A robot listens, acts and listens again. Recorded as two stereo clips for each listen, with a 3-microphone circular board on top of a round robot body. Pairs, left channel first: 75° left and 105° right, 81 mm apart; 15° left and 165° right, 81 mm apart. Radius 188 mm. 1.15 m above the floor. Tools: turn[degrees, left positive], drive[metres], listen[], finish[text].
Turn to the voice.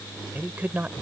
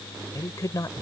Thought: The man speaking: 35° right.
Action: turn[-35]
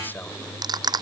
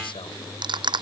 Action: listen[]
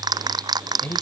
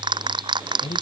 Thought: The man speaking is now 10° left.
Action: turn[10]
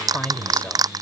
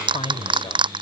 Action: finish[Facing the man speaking.]